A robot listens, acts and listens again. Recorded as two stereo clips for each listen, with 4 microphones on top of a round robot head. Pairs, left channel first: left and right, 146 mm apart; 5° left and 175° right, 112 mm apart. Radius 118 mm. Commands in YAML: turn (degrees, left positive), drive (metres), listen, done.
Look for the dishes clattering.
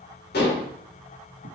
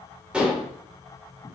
turn: 105
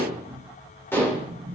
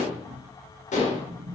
turn: 15
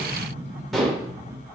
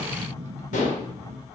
done: "Facing the dishes clattering, 2 to 4 m away."